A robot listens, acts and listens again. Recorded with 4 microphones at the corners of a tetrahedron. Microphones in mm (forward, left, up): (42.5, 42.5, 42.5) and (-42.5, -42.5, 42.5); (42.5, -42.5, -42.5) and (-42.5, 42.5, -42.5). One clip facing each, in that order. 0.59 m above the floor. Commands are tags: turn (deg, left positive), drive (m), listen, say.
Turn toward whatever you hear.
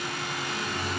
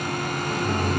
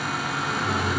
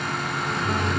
<turn deg="-135"/>
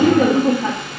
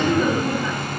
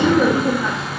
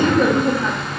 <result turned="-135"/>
<turn deg="45"/>
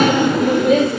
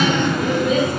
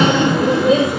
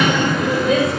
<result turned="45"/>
<turn deg="20"/>
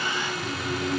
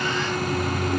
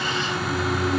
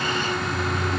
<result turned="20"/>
<say>Found it: laughter, straight ahead, 2 to 4 m away.</say>